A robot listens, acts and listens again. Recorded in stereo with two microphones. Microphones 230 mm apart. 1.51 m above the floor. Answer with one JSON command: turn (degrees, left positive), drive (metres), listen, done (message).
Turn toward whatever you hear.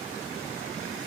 {"listen": true}
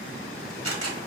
{"turn": -90}
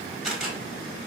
{"done": "Found it: a camera shutter, straight ahead."}